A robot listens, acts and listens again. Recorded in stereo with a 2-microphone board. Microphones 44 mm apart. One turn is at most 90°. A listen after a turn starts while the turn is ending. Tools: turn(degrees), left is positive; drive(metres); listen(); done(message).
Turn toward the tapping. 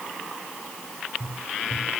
turn(degrees=-55)
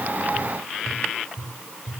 done("Facing the tapping, over 4 m away.")